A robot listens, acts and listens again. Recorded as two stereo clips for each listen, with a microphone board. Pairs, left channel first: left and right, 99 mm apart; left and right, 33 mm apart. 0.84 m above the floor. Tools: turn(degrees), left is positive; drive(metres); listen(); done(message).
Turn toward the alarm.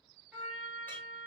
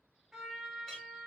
listen()
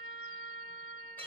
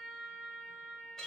listen()
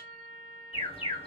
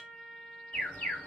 turn(degrees=75)
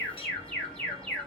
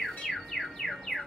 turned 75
turn(degrees=10)
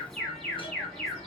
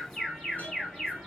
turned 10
done("Found it: an alarm, straight ahead, 1 to 2 m away.")